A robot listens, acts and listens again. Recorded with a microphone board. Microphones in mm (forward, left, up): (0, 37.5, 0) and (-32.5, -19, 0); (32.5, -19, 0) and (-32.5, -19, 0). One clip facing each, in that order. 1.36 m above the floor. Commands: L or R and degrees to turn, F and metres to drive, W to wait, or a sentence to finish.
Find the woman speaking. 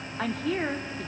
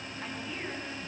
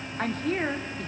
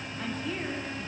L40
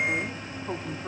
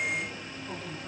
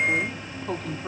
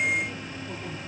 Facing the woman speaking, 2 to 4 m away.